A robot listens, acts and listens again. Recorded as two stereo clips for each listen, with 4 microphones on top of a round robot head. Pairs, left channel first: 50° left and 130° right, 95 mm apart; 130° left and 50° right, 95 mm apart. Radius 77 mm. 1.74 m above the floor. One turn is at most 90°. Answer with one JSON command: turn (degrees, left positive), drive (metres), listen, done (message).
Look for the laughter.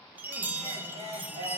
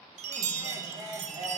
{"turn": -90}
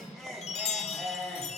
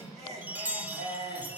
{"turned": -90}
{"turn": -40}
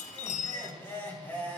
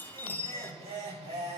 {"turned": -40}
{"turn": -25}
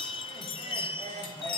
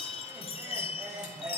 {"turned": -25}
{"done": "Facing the laughter."}